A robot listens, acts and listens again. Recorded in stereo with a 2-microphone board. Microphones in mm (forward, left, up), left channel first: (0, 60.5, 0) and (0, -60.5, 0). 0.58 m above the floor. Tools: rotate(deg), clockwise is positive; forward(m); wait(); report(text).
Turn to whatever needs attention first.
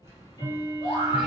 rotate(-65)
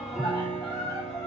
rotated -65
rotate(-35)
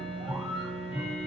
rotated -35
wait()
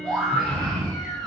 report("Facing the scream.")